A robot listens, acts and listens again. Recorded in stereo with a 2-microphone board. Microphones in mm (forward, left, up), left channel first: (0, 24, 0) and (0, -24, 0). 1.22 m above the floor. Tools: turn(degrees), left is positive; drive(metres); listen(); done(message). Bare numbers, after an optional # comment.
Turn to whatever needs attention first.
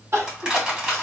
# The crying: about 60° right or 120° right.
turn(-60)
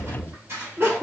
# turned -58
# So it is at 55° right.
turn(-55)
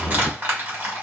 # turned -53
listen()
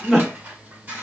done("Facing the crying, 1 to 2 m away.")